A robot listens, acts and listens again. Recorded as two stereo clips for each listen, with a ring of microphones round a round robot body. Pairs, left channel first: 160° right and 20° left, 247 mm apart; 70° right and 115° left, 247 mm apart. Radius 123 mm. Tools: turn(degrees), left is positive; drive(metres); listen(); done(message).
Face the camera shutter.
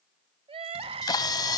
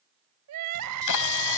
turn(degrees=-80)
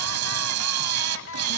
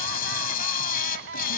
turn(degrees=-10)
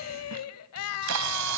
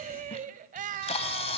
done("Found it: a camera shutter, straight ahead.")